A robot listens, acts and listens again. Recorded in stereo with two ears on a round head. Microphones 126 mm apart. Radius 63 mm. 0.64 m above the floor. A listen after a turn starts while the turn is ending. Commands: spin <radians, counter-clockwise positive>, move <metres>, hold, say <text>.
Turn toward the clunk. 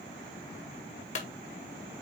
spin 0.87
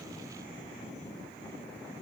hold
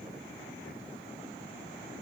say I heard a clunk, but can't make it out now. It was about straight ahead or 80° left.